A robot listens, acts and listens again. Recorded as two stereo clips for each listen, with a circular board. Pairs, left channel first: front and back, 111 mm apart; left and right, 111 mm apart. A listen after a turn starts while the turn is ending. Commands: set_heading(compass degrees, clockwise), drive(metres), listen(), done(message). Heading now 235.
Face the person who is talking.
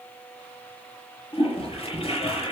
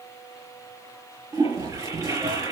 listen()
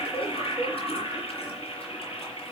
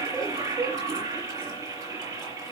listen()
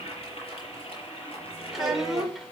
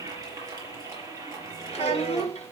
set_heading(140)
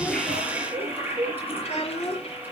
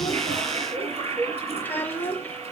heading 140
set_heading(125)
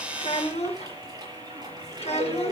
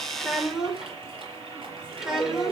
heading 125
done("Found it: a child speaking, straight ahead.")